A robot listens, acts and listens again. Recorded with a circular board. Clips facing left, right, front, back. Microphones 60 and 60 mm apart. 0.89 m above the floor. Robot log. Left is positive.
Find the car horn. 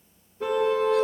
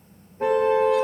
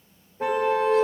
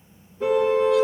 note: The car horn: 45° right.
cmd yaw -45
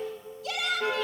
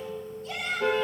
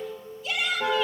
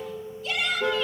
end: Facing the car horn.